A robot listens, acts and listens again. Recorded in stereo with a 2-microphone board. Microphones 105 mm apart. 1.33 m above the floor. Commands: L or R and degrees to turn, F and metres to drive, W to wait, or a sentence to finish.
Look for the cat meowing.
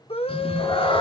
L55
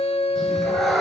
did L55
Facing the cat meowing, 2 to 4 m away.